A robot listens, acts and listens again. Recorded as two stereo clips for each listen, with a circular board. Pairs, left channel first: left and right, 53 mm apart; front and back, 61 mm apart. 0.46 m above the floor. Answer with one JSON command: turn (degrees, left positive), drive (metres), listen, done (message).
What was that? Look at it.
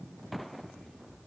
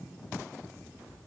{"listen": true}
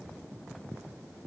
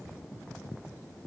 {"listen": true}
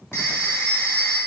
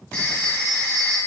{"turn": 70}
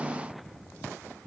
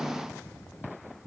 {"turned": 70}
{"listen": true}
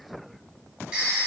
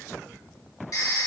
{"turn": -10}
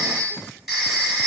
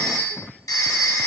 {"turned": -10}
{"done": "Found it: a phone ringing, straight ahead."}